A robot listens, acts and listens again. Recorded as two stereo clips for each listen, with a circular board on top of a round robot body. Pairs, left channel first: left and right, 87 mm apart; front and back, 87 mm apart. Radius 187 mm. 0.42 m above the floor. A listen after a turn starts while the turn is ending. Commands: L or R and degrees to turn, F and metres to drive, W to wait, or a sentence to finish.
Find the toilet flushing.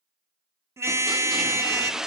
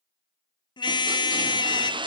R175
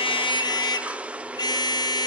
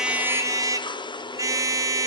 R15
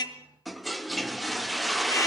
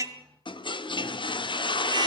Found it: a toilet flushing, straight ahead.